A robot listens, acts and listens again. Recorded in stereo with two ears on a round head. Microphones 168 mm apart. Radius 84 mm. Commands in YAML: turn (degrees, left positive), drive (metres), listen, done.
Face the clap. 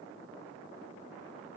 listen: true
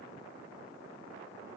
listen: true
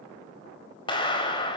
turn: 25
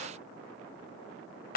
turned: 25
turn: 125
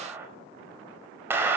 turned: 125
turn: -10
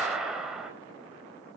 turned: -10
done: "Facing the clap."